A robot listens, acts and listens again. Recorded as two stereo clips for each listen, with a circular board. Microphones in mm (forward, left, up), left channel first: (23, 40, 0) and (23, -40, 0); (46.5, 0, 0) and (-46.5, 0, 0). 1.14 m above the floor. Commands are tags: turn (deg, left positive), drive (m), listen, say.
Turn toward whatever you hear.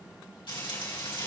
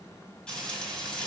<turn deg="80"/>
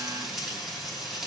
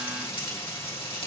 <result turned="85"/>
<say>Facing the frying.</say>